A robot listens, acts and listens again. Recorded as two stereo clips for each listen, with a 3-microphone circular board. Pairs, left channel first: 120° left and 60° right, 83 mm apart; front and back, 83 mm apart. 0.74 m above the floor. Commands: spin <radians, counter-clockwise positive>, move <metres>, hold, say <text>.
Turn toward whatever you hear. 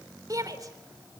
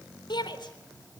spin -0.35
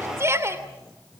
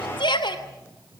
say Facing the shout, 2 to 4 m away.